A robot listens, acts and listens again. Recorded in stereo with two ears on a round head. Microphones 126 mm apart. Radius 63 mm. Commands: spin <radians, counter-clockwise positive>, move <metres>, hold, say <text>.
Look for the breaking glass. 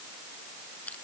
hold
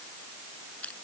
hold
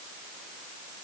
say I can't make out breaking glass.